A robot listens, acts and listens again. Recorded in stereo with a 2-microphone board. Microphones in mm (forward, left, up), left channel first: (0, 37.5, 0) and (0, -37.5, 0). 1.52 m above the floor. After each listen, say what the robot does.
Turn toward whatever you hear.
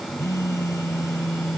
Turn 45° left.
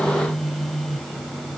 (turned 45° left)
Found it: a phone buzzing, straight ahead.